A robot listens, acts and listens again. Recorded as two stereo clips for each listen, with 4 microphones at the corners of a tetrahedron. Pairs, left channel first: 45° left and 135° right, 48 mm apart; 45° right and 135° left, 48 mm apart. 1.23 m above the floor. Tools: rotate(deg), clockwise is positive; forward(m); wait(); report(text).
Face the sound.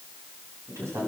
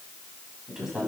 rotate(145)
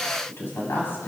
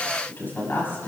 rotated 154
report("Found it: a woman speaking, straight ahead, over 4 m away.")